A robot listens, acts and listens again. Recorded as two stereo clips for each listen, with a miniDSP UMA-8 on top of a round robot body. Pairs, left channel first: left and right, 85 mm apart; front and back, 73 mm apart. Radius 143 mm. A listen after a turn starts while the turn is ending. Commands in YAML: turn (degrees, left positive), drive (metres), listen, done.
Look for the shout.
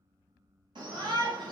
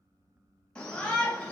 turn: -75
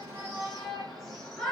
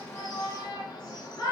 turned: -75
done: "Found it: a shout, straight ahead."